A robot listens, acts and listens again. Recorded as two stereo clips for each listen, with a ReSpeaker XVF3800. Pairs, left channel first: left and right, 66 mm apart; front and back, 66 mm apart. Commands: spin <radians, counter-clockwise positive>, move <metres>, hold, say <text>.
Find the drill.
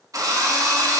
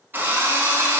spin -2.09
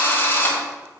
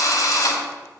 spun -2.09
spin 0.52
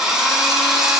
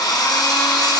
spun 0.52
say Facing the drill.